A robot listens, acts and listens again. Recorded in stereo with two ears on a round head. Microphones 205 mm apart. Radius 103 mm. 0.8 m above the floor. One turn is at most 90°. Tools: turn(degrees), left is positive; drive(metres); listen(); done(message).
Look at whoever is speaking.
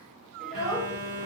turn(degrees=30)
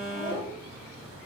listen()
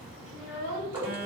turn(degrees=90)
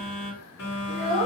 turn(degrees=-20)
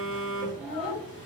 done("Found it: a child speaking, straight ahead.")